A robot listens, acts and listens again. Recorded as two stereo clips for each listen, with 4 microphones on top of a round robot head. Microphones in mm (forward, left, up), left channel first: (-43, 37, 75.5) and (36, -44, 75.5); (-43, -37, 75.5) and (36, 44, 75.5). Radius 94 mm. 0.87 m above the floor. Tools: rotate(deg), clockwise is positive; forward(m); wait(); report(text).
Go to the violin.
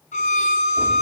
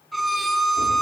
rotate(-135)
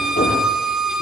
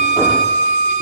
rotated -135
rotate(-40)
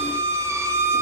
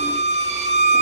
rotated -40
rotate(-20)
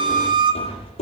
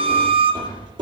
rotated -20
forward(1.0)
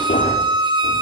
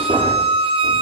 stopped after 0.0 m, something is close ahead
report("Blocked. The violin is further on, straight ahead.")